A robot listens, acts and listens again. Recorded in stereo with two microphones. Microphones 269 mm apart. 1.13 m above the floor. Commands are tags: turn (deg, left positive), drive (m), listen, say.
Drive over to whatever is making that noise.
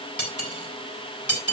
<turn deg="90"/>
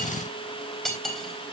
<drive m="1.0"/>
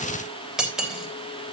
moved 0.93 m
<drive m="1.0"/>
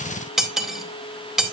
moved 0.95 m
<drive m="1.0"/>
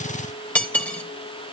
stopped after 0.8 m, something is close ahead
<say>I am next to the cutlery clinking.</say>